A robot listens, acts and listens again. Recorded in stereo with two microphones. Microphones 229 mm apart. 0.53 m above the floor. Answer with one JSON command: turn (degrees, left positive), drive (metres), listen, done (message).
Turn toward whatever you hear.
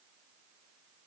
{"listen": true}
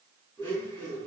{"turn": 30}
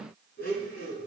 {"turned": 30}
{"turn": 140}
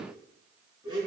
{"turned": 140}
{"turn": -20}
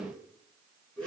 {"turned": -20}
{"done": "Facing the blender, 2 to 4 m away."}